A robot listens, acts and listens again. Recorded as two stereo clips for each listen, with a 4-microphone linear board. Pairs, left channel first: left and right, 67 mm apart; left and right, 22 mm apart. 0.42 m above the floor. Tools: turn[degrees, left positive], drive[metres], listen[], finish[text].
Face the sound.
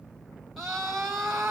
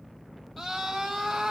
Action: turn[30]
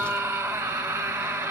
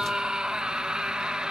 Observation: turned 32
Thought: So it is at 30° right.
Action: turn[-30]
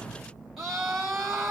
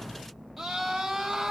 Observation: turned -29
Action: finish[Found it: a scream, straight ahead.]